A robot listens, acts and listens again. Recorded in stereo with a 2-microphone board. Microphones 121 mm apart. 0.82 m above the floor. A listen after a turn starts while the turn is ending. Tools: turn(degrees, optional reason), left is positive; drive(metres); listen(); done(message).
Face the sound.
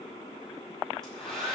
turn(degrees=30)
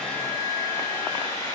turn(degrees=145, reason="So it is at 145° left.")
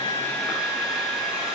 done("Found it: a hair dryer, straight ahead.")